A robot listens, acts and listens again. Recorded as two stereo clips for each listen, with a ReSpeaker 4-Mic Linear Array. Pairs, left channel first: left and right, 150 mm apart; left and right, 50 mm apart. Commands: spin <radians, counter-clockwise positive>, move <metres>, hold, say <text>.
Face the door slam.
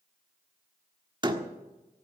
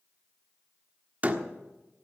spin -0.52
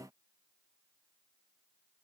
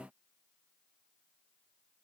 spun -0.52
hold
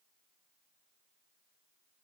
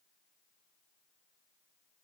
say I heard a door slam, but can't make it out now. It was about straight ahead or 120° right.